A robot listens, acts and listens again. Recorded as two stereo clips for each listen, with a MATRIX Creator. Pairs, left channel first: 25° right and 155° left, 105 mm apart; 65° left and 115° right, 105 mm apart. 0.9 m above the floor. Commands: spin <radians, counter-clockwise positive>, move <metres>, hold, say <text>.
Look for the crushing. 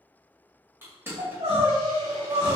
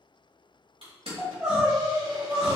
spin -2.36
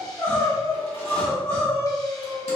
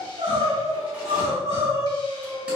hold
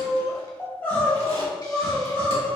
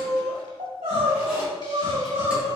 hold
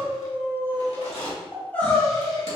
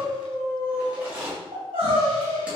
spin -0.61
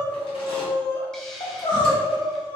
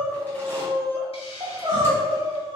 hold
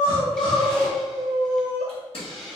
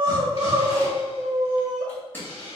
say Found it: crushing, straight ahead, 1 to 2 m away.